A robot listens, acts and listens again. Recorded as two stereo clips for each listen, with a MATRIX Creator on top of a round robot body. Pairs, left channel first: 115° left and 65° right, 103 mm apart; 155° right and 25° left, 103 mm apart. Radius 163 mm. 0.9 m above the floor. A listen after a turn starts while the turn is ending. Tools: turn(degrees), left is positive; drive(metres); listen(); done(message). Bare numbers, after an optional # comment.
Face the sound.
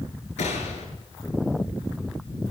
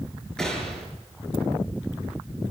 # The gunshot: 120° left.
turn(120)
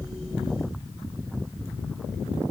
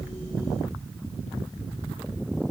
done("Facing where the gunshot came from. I can't hear it now.")